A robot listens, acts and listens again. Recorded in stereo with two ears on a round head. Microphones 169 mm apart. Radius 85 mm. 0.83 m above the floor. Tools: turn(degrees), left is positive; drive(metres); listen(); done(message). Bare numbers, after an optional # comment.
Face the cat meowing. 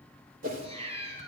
# The cat meowing: about 35° right or 145° right.
turn(-35)
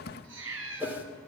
# So it is at 105° right.
turn(-105)
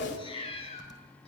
# The cat meowing is now 30° left.
turn(30)
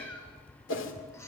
# The cat meowing is now 15° left.
turn(15)
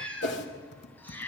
# The cat meowing is now 10° left.
turn(10)
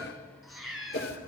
done("Found it: a cat meowing, straight ahead.")